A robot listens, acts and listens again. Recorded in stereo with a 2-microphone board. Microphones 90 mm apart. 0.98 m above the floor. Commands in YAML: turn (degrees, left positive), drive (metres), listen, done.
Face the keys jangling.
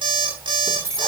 turn: -35
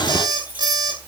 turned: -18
listen: true
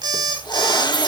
listen: true
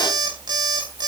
done: "I heard keys jangling, but can't make it out now. It was about 20° right or 125° right."